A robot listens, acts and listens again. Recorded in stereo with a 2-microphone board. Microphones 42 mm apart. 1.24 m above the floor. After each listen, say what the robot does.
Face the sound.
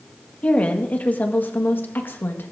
Turn 60° left.
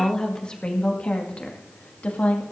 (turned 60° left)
Turn 40° left.
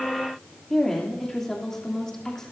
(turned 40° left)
Turn 10° left.
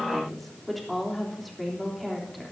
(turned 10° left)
Found it: a woman speaking, straight ahead, 2 to 4 m away.